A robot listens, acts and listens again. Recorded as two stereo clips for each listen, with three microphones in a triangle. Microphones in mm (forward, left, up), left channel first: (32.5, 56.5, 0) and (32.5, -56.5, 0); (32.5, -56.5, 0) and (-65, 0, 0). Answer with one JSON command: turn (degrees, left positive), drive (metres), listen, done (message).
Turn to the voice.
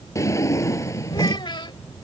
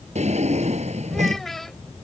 {"turn": 55}
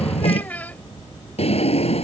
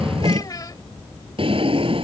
{"turn": 20}
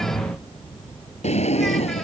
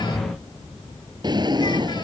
{"listen": true}
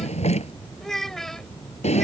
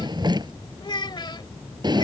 {"done": "Found it: a child speaking, straight ahead."}